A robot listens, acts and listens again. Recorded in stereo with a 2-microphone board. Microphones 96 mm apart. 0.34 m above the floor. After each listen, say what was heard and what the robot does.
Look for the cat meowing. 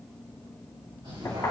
The cat meowing: about 55° right or 125° right. Turn 55° right.
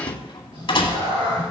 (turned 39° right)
So it is at 80° right. Turn 80° right.
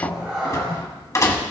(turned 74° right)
Found it: a cat meowing, straight ahead.